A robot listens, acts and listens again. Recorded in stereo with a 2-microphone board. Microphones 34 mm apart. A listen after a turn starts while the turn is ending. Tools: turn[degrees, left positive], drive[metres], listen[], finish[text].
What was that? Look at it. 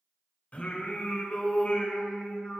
Thought: The singing: about 40° left or 140° left.
Action: turn[40]
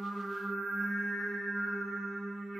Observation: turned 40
Action: finish[Facing the singing, 2 to 4 m away.]